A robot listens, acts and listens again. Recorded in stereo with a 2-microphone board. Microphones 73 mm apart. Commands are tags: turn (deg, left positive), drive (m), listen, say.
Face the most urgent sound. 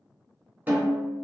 <listen/>
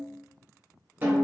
<listen/>
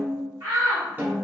<turn deg="-55"/>
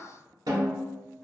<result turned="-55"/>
<listen/>
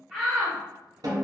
<turn deg="-10"/>
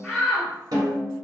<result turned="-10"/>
<say>Found it: a shout, straight ahead, 1 to 2 m away.</say>